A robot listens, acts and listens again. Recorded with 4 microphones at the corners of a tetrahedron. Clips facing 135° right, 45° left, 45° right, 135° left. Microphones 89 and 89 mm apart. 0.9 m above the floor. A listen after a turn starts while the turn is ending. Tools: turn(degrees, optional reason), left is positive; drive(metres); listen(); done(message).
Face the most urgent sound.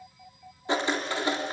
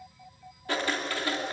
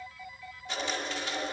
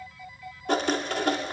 listen()
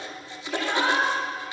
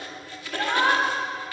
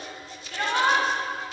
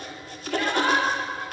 done("Facing the shout, over 4 m away.")